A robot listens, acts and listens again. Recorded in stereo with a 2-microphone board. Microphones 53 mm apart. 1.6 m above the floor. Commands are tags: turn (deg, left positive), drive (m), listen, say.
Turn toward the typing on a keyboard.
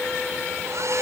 <listen/>
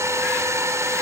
<listen/>
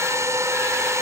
<say>I can't make out typing on a keyboard, only a hair dryer.</say>